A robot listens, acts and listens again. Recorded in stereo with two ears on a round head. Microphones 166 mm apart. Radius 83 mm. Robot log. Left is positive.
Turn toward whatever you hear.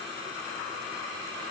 cmd idle
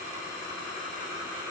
cmd idle
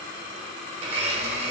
note: The blender: about 30° right or 150° right.
cmd yaw -30
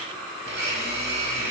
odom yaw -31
note: So it is at 115° right.
cmd yaw -115
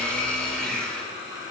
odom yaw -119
end: Found it: a blender, straight ahead, 1 to 2 m away.